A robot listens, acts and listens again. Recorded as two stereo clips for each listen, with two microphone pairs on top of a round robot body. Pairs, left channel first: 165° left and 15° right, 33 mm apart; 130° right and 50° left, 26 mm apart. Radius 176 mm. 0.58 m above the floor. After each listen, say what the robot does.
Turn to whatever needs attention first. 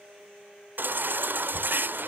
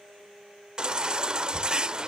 Turn 10° right.
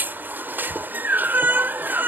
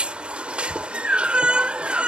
Found it: a baby crying, straight ahead.